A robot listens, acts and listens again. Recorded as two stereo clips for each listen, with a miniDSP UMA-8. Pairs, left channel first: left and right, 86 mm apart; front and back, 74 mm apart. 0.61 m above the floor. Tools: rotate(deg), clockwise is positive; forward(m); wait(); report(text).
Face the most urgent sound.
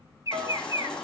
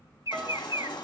rotate(-10)
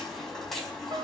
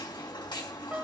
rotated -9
report("Found it: a baby crying, straight ahead.")